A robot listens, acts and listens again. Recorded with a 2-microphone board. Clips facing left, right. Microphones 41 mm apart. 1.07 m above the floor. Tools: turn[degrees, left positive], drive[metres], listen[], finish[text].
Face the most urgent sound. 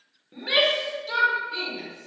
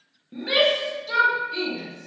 Action: turn[30]
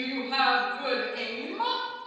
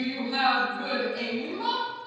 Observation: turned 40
Thought: So it is at 140° left.
Action: turn[140]
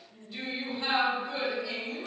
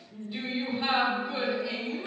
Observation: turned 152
Thought: The shout is now 15° right.
Action: turn[-15]
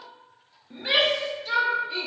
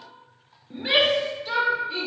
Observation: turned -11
Action: finish[Facing the shout, under 1 m away.]